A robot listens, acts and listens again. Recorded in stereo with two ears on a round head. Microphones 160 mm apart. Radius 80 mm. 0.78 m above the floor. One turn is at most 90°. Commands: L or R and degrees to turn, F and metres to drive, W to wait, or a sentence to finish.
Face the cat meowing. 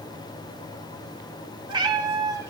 R20
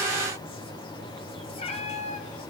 L40
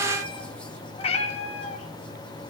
L35
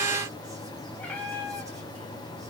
L10
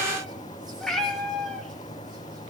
Found it: a cat meowing, straight ahead, 1 to 2 m away.